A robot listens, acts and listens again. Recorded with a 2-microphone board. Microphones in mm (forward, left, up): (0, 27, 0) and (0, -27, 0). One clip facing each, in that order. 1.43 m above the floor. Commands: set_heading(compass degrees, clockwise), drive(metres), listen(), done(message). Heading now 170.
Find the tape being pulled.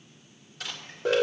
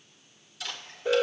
set_heading(140)
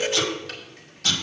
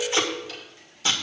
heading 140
set_heading(165)
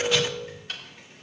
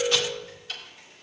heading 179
set_heading(164)
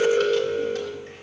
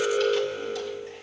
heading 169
listen()
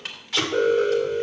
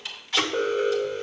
done("Found it: tape being pulled, straight ahead, 1 to 2 m away.")